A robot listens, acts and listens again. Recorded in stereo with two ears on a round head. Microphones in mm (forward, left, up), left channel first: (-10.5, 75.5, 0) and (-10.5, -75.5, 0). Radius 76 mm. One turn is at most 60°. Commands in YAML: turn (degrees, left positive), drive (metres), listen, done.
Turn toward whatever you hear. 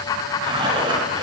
turn: -25
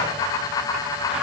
listen: true
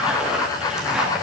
done: "Facing the zipper, 2 to 4 m away."